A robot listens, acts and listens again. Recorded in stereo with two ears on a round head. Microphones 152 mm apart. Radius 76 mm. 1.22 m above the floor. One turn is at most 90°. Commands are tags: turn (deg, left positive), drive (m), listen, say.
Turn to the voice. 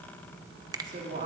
<turn deg="-50"/>
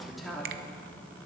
<say>Found it: a woman speaking, straight ahead, 2 to 4 m away.</say>